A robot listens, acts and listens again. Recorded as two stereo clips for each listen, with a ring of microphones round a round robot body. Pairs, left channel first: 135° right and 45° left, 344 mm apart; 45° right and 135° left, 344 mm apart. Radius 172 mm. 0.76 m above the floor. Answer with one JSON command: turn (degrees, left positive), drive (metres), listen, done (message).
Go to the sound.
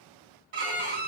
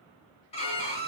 {"turn": 30}
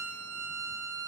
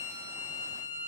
{"turn": -10}
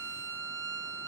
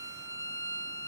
{"drive": 1.0}
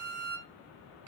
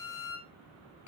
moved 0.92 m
{"drive": 1.0}
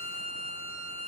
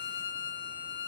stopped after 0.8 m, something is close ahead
{"done": "Arrived at the violin, straight ahead."}